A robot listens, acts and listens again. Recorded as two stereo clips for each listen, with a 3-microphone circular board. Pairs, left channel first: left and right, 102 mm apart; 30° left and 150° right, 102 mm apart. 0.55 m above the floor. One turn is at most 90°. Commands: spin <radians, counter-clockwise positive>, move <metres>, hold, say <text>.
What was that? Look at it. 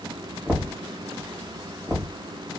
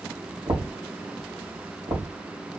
spin 1.57
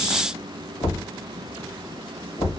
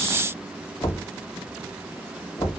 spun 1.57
spin 1.31
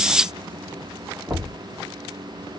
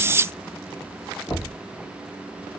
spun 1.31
spin -0.35
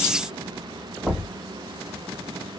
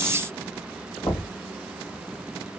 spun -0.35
say Found it: knocking, straight ahead.